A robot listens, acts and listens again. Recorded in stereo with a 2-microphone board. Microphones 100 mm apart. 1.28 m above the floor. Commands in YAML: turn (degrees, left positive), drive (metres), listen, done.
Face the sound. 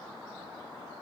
listen: true
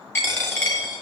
turn: 20
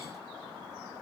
listen: true
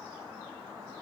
done: "I heard a dropped coin, but can't make it out now. It was about straight ahead or 140° left."